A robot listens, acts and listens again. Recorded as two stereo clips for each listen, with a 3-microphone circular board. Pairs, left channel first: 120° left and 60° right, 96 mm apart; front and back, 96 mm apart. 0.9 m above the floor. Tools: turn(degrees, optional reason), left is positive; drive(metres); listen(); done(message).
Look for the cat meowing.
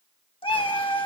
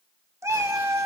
turn(degrees=125, reason="The cat meowing: 125° left.")
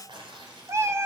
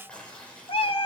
done("Found it: a cat meowing, straight ahead.")